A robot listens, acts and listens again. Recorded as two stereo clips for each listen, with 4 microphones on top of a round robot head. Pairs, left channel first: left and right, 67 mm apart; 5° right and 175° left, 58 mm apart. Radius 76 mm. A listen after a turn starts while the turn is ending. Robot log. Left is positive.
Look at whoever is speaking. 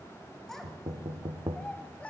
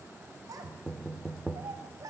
note: The child speaking: 160° left.
cmd yaw +160
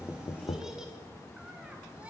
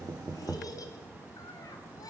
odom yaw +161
note: The child speaking is now 15° right.
cmd yaw -15
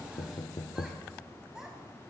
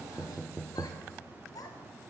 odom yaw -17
note: The child speaking is now 10° right.
cmd yaw -10
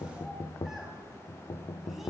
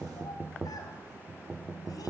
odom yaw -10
cmd idle
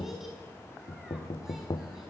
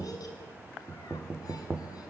cmd idle
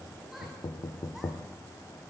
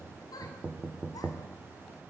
end: Facing where the child speaking came from. I can't hear it now.